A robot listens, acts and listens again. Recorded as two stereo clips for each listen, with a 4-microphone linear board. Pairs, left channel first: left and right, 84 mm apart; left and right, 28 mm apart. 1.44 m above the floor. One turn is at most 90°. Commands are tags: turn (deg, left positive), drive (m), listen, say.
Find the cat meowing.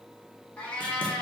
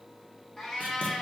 <turn deg="20"/>
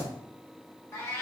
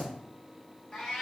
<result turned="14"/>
<turn deg="90"/>
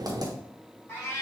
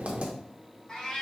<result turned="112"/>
<turn deg="35"/>
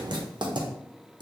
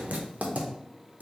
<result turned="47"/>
<turn deg="-15"/>
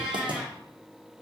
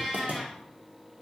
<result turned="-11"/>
<say>Found it: a cat meowing, straight ahead, 1 to 2 m away.</say>